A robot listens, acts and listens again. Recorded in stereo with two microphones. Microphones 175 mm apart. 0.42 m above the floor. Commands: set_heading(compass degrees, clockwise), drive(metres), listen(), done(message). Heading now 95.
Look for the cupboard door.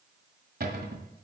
set_heading(160)
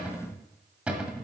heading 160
done("Facing the cupboard door, 1 to 2 m away.")